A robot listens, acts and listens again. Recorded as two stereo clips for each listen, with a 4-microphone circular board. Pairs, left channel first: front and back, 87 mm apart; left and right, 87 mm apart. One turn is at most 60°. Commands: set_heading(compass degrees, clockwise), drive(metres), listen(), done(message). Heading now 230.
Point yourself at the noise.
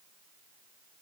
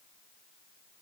listen()
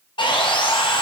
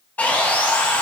set_heading(215)
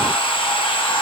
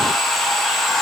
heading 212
done("Found it: sawing, straight ahead, under 1 m away.")